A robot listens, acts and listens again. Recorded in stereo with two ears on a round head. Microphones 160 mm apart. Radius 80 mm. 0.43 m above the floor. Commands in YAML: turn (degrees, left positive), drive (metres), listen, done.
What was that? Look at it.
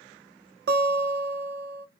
turn: -60
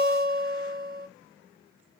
turn: -50
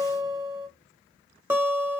turn: -10
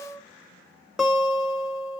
done: "Found it: a guitar, straight ahead."